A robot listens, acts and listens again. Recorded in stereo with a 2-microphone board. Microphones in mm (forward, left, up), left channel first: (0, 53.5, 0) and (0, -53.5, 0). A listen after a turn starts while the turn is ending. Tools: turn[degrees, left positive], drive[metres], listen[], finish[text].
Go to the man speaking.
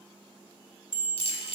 Action: listen[]
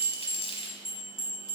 Action: listen[]
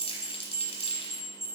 Action: finish[I can't make out a man speaking, only crumpling and a bell.]